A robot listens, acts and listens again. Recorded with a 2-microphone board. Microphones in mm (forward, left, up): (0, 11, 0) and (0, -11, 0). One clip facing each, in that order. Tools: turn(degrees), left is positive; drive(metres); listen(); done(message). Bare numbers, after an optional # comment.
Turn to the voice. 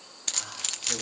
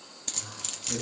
turn(90)
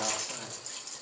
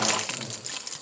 # So it is at 15° left.
turn(15)
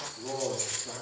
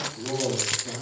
done("Found it: a man speaking, straight ahead.")